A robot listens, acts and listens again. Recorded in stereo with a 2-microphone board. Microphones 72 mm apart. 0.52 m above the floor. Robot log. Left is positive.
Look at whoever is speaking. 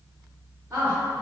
note: The woman speaking: about 40° right or 140° right.
cmd yaw -40
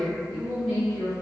end: Facing the woman speaking.